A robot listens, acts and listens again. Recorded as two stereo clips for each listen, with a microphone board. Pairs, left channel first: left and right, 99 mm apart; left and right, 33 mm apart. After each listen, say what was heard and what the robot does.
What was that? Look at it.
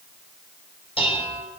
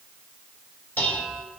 The dishes clattering: about 75° left or 105° left. Turn 75° left.
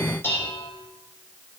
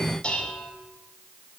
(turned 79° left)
So it is at 25° left. Turn 25° left.
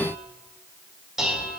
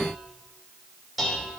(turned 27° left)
Found it: dishes clattering, straight ahead, 2 to 4 m away.